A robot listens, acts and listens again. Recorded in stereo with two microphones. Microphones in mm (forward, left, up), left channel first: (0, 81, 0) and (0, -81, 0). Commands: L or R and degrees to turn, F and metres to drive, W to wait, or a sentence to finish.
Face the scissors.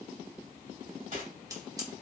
R20
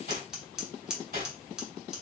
Facing the scissors, 1 to 2 m away.